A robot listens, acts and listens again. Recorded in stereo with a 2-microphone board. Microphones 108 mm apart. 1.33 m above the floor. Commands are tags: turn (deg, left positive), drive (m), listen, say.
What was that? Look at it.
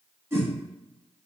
<turn deg="-25"/>
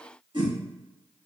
<turn deg="-130"/>
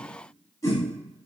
<turn deg="30"/>
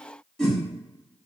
<say>Found it: a whoosh, straight ahead.</say>